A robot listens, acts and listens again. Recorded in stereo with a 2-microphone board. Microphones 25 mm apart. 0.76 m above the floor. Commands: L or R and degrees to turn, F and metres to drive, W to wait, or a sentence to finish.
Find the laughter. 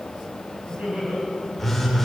R90
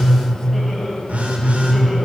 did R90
W
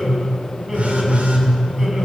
W
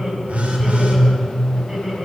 R15
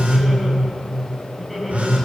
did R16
Facing the laughter, over 4 m away.